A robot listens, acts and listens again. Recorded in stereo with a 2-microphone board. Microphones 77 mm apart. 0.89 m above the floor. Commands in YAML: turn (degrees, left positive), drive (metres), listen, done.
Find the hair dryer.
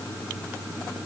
listen: true
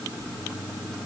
listen: true
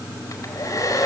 turn: 50
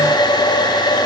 turn: 80
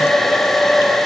done: "Found it: a hair dryer, straight ahead."